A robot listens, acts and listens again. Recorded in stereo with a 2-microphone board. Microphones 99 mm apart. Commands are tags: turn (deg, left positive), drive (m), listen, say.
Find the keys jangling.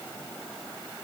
<listen/>
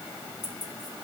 <turn deg="45"/>
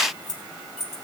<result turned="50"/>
<say>Facing the keys jangling, 2 to 4 m away.</say>